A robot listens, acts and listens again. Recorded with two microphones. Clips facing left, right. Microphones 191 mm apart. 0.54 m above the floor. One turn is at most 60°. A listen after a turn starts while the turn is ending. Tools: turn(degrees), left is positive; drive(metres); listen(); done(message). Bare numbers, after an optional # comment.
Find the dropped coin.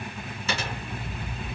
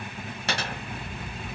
turn(-60)
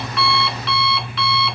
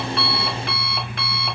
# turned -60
# Nothing new. It was at 30° right.
turn(-30)
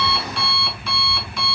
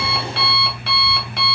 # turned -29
done("I heard a dropped coin from this way, but can't make it out now.")